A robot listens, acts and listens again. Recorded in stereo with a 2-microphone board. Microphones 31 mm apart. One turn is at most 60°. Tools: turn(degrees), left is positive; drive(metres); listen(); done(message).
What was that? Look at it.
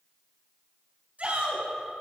turn(degrees=-45)
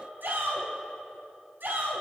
turn(degrees=-60)
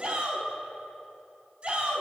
turn(degrees=-35)
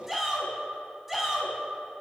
done("Found it: a shout, straight ahead, over 4 m away.")